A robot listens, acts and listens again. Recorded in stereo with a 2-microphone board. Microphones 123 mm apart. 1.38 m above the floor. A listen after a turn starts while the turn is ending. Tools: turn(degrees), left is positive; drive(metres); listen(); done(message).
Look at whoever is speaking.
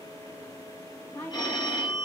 turn(degrees=30)
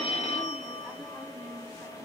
listen()
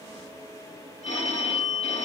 listen()
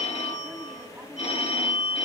done("I heard a woman speaking, but can't make it out now. It was about straight ahead or 120° left.")